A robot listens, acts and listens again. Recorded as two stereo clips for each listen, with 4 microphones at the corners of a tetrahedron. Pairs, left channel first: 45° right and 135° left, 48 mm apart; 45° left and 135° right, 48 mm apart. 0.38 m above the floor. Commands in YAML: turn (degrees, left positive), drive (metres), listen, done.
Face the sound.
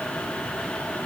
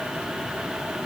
listen: true
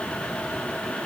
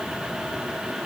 listen: true
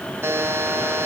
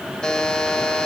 turn: 120
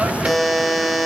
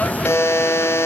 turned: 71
turn: 50
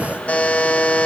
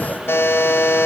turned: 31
turn: 20
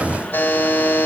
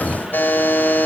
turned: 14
done: "Found it: a buzzer, straight ahead."